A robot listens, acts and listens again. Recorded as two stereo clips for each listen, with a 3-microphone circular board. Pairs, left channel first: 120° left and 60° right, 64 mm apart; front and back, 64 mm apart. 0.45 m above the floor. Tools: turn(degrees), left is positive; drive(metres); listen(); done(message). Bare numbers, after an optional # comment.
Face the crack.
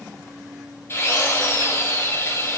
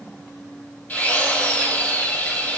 listen()
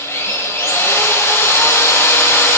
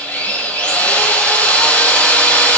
listen()
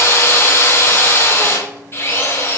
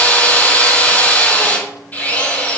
done("I can't make out a crack, only a drill.")